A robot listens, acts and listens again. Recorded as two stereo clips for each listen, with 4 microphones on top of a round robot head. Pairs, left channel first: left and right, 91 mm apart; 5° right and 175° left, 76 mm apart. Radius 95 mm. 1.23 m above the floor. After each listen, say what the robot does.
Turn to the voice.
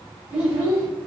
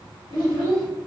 Turn 165° right.
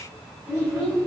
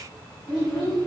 Turn 25° right.
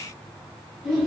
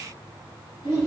Turn 10° left.
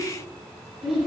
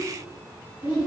Facing the child speaking, 2 to 4 m away.